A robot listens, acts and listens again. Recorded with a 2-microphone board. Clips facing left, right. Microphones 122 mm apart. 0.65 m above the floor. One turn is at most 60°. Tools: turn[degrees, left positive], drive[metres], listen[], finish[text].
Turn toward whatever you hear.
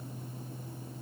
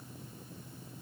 Action: listen[]
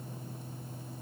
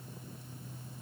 Action: listen[]
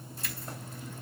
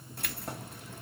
Thought: The keys jangling: about 60° right or 120° right.
Action: turn[-60]
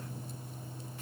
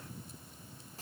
Action: listen[]
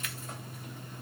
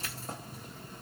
Thought: So it is at 40° right.
Action: turn[-40]
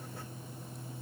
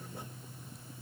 Action: listen[]
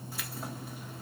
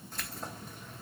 Action: finish[Facing the keys jangling.]